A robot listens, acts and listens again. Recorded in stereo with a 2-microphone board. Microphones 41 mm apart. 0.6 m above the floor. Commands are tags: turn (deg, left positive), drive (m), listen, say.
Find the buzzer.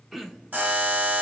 <turn deg="-45"/>
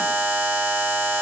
<turn deg="-90"/>
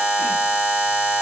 <turn deg="-30"/>
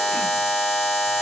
<say>Found it: a buzzer, straight ahead, 1 to 2 m away.</say>